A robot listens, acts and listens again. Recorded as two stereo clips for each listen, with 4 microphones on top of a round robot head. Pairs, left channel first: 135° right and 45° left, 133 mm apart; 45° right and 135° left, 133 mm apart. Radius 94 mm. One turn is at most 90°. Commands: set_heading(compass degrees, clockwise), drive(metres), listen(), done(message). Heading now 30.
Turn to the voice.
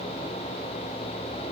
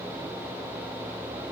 listen()
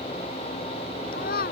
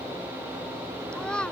set_heading(120)
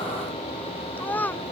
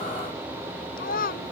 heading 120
set_heading(175)
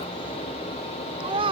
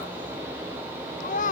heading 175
set_heading(185)
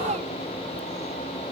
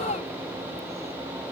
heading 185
listen()
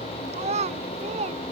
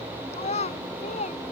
done("Facing the child speaking.")